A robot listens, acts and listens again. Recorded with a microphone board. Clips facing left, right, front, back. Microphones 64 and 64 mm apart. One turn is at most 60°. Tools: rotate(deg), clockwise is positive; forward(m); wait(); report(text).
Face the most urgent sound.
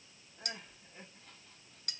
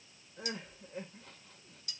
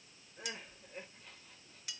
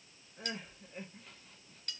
rotate(60)
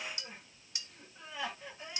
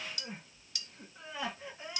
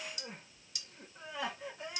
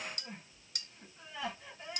rotate(20)
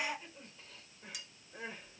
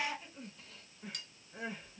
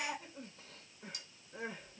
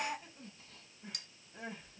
report("Facing the crying, 2 to 4 m away.")